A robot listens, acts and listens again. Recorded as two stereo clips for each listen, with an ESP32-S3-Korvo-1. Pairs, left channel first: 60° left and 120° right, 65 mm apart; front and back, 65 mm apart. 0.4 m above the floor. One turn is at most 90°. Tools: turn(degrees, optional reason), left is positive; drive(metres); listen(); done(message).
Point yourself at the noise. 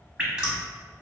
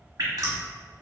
turn(degrees=90, reason="The dripping: 165° left.")
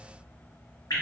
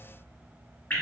turn(degrees=65, reason="The dripping is now 65° left.")
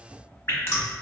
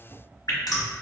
turn(degrees=10, reason="The dripping is now 10° left.")
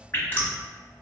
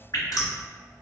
done("Facing the dripping.")